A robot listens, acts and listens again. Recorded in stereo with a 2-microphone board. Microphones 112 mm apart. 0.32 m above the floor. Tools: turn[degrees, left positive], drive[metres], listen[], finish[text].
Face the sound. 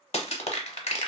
Thought: The crushing: about 70° left or 110° left.
Action: turn[70]
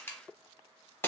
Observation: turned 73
Thought: So it is at 25° left.
Action: turn[25]
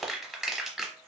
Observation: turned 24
Action: finish[Found it: crushing, straight ahead.]